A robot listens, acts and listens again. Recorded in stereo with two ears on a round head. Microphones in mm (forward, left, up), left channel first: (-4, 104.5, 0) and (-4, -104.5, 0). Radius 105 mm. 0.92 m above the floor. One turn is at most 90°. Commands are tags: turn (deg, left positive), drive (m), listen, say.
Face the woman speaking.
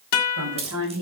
<turn deg="-75"/>
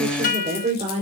<turn deg="-30"/>
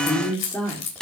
<say>Found it: a woman speaking, straight ahead.</say>